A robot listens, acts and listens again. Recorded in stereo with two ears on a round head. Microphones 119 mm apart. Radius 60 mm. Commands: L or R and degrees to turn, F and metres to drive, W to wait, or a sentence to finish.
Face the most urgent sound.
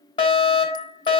L40
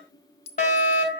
L95
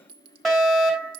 Found it: a fire alarm, straight ahead, 2 to 4 m away.